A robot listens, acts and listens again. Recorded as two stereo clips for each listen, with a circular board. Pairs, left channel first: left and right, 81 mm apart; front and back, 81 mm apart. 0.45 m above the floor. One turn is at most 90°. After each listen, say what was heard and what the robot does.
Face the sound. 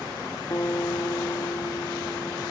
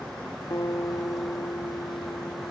The guitar: 45° left. Turn 45° left.
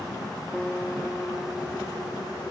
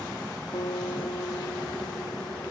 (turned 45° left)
The guitar is now 10° left. Turn 10° left.
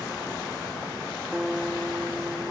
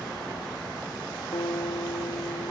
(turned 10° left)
Found it: a guitar, straight ahead.